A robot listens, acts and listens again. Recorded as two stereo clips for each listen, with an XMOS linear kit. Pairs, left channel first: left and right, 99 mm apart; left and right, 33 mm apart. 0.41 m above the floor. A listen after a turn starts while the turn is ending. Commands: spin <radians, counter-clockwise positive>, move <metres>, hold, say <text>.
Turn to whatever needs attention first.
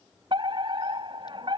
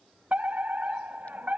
spin -0.96
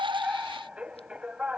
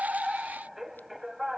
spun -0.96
spin -0.17
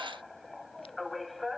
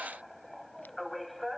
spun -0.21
say Facing the fire alarm.